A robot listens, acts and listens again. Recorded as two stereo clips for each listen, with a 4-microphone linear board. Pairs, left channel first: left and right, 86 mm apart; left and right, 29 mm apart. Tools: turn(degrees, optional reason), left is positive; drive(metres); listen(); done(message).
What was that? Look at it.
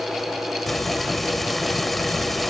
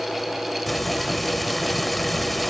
turn(degrees=30)
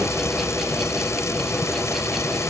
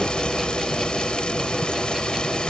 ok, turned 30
turn(degrees=145, reason="So it is at 145° left.")
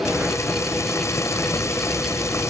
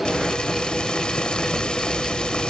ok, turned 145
turn(degrees=35, reason="The frying is now 35° left.")
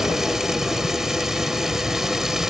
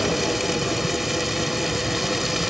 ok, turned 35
done("Found it: frying, straight ahead.")